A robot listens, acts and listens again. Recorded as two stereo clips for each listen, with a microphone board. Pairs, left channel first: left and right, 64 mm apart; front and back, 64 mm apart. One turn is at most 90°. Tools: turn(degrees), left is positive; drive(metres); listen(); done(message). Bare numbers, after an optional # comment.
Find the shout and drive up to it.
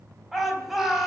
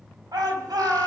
# The shout: 175° right.
turn(-90)
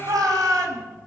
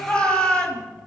# The shout is now 70° right.
turn(-70)
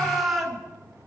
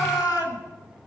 drive(1.0)
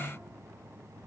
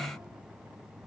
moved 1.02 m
listen()
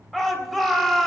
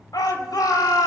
drive(1.0)
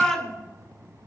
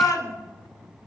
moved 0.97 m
# The shout is now 15° left.
turn(15)
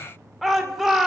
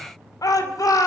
drive(1.0)
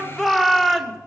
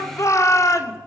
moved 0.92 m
drive(1.0)
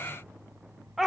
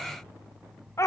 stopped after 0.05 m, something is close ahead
done("Arrived at the shout, straight ahead.")